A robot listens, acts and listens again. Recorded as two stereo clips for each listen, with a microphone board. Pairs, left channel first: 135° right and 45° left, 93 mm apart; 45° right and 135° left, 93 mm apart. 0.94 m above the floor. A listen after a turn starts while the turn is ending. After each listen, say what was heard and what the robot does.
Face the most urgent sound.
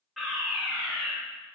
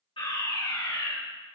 The fire alarm: 45° right. Turn 45° right.
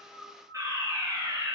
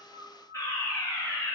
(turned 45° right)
Found it: a fire alarm, straight ahead.